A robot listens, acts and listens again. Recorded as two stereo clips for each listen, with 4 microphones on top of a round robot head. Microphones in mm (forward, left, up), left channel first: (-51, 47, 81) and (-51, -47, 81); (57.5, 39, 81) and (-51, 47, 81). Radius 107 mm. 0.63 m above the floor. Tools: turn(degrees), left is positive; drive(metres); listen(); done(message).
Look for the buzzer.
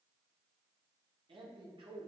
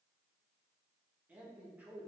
listen()
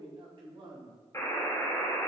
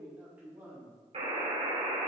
turn(degrees=150)
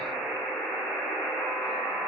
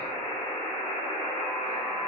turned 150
turn(degrees=15)
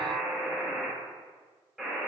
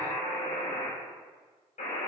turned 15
done("Found it: a buzzer, straight ahead.")